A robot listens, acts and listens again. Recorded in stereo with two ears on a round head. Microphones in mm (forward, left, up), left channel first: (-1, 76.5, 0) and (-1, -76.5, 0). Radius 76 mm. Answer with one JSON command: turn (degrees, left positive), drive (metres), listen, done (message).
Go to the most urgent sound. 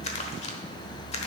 {"listen": true}
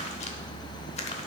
{"listen": true}
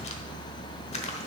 {"done": "I can't make out anything urgent to turn to."}